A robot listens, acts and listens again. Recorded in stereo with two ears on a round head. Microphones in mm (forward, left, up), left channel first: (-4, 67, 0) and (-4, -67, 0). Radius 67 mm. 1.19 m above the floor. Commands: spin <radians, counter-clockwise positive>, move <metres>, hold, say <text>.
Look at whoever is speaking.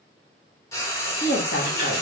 spin 1.05
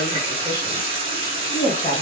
spin 0.70
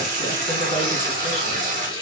hold
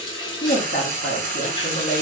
spin 1.13
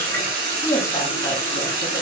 spin 0.26
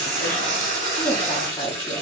say Found it: a woman speaking, straight ahead, 1 to 2 m away.